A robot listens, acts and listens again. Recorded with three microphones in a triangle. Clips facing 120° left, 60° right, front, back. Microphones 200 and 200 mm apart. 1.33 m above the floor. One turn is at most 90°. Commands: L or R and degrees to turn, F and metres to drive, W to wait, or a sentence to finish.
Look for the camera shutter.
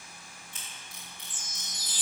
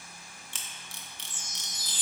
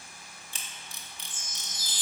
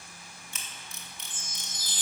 R55
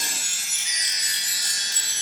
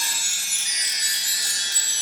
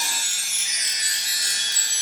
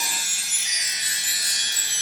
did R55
W
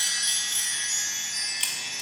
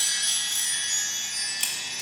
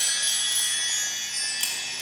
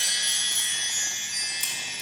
W
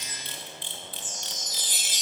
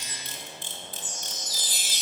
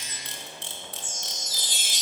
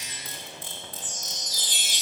R15
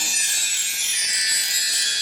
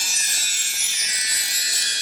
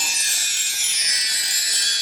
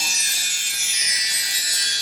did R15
W
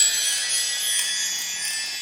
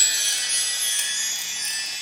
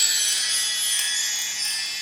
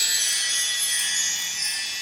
W
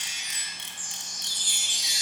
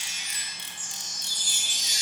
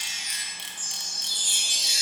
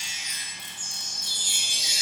Facing the camera shutter.